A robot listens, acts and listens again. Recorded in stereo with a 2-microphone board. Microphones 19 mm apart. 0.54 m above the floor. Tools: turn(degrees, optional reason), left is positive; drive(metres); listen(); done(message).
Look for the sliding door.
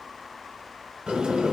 turn(degrees=-70, reason="The sliding door: about 70° right or 110° right.")
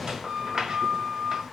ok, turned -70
turn(degrees=-40, reason="So it is at 40° right.")
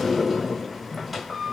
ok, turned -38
done("Facing the sliding door.")